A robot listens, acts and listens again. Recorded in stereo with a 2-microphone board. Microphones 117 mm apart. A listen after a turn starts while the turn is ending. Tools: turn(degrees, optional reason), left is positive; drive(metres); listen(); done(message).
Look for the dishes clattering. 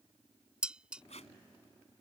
turn(degrees=-30)
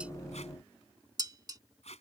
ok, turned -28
turn(degrees=-140, reason="So it is at 140° right.")
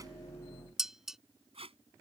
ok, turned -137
done("Found it: dishes clattering, straight ahead.")